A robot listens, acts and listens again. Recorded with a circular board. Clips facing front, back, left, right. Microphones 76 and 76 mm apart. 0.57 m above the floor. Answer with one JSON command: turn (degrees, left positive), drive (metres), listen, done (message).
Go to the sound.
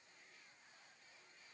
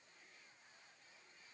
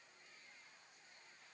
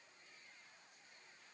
{"listen": true}
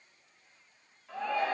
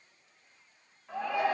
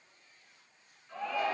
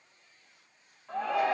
{"turn": -105}
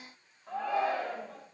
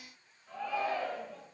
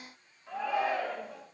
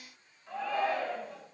{"turn": 10}
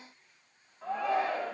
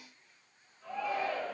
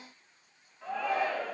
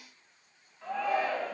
{"drive": 1.0}
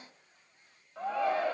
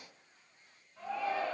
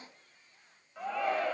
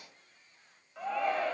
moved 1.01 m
{"drive": 1.0}
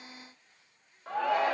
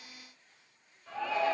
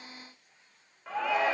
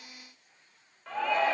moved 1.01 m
{"drive": 1.0}
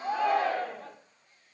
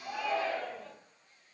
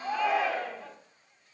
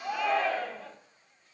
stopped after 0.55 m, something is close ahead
{"done": "Arrived at the shout, straight ahead."}